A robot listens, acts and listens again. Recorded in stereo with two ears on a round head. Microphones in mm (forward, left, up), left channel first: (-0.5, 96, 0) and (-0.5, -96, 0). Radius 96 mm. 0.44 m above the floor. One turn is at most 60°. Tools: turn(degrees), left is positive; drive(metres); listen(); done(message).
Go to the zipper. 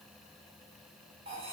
listen()
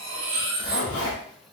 turn(degrees=55)
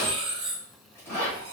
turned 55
turn(degrees=15)
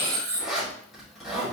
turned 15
drive(metres=1.0)
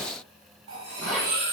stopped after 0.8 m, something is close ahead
done("Arrived at the zipper, straight ahead.")